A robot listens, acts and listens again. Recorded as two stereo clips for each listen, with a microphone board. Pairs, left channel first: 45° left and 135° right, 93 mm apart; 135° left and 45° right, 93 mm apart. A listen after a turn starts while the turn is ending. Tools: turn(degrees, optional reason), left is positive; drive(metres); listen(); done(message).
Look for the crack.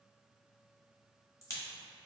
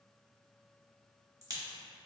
done("Facing the crack.")